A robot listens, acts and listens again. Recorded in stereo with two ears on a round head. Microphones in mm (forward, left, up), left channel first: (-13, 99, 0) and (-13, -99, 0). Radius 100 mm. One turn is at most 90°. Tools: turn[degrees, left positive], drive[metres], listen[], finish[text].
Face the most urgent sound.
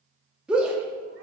Action: turn[-30]
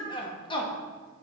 Thought: So it is at 25° left.
Action: turn[25]
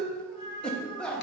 Action: finish[Facing the shout.]